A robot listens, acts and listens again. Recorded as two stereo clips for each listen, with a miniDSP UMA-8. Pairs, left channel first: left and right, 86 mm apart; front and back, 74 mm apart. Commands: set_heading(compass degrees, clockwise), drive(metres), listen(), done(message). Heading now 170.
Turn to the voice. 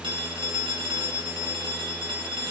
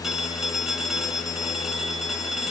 listen()
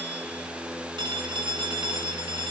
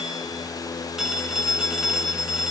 listen()
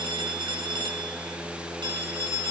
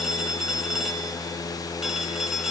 done("I can't make out anyone speaking to turn to.")